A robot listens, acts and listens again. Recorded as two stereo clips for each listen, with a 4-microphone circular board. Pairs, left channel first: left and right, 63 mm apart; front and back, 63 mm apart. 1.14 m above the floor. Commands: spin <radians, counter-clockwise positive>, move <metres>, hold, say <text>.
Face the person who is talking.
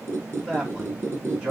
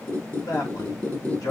spin -0.26
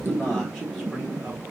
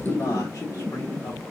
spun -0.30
hold
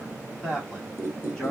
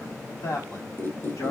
say Facing the man speaking.